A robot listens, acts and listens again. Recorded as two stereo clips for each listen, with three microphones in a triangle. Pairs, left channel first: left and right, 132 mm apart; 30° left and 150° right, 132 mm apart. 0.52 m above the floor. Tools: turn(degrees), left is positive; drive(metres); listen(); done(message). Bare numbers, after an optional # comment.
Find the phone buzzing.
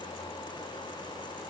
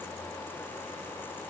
listen()
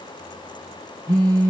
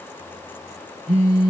# The phone buzzing: 150° right.
turn(-150)
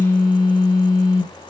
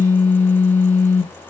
# The phone buzzing is now 25° left.
turn(25)
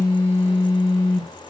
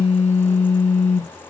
done("Facing the phone buzzing, 2 to 4 m away.")